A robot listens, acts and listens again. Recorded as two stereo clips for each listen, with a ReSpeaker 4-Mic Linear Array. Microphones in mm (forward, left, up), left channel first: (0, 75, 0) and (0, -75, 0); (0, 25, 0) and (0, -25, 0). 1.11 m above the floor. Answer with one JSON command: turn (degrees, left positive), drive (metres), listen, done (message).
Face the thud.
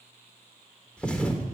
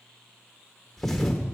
{"turn": 30}
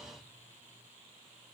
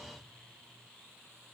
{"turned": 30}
{"listen": true}
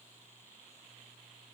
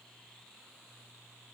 {"done": "I heard a thud, but can't make it out now. It was about 25° right or 145° left."}